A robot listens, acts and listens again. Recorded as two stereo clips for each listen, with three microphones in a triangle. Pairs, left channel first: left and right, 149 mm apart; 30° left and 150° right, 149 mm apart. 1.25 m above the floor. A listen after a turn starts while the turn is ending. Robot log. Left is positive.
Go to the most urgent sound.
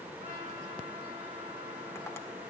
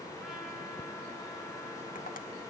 cmd idle
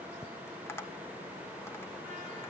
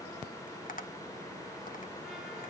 cmd idle
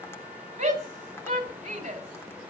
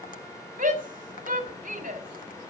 note: The shout: 120° right.
cmd yaw -120
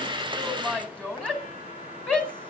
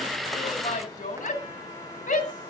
note: The shout is now 10° left.
cmd yaw +10
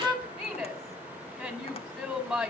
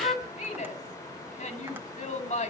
cmd fwd 1.0
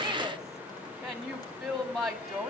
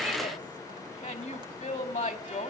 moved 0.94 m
cmd fwd 1.0
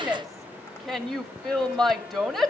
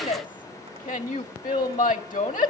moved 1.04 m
cmd fwd 1.0
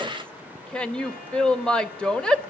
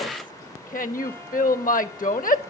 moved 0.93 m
cmd fwd 1.0
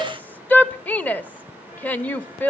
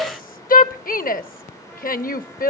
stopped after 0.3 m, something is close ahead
note: The shout is now 10° left.
cmd yaw +10
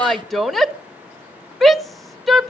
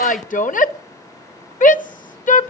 end: Arrived at the shout, straight ahead.